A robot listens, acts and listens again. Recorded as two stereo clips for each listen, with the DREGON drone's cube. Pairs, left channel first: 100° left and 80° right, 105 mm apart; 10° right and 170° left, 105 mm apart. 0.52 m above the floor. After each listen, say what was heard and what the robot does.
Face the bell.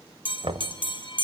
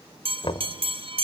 The bell: 140° left. Turn 140° left.
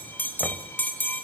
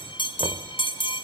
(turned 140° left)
The bell is now 30° left. Turn 30° left.
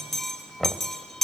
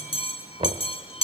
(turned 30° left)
The bell is now 15° left. Turn 15° left.
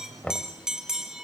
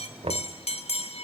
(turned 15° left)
Found it: a bell, straight ahead, 2 to 4 m away.